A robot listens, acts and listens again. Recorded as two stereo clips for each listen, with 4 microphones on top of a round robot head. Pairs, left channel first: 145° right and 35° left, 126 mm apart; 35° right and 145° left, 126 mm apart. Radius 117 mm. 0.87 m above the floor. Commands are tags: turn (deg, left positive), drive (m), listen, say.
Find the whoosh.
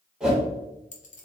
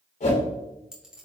<turn deg="-50"/>
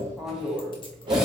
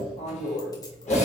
<turn deg="-15"/>
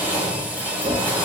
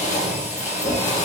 <say>Found it: a whoosh, straight ahead, 1 to 2 m away.</say>